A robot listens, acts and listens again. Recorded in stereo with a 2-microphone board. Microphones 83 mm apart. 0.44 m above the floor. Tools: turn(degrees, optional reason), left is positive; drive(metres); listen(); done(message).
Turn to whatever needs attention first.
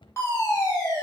turn(degrees=30, reason="The fire alarm: about 30° left or 150° left.")
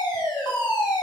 turn(degrees=115, reason="So it is at 115° left.")
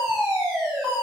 done("Facing the fire alarm.")